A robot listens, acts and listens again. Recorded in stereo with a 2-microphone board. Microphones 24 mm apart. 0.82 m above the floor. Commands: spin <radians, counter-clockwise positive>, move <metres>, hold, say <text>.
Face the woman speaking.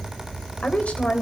spin 1.57
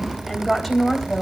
say Facing the woman speaking.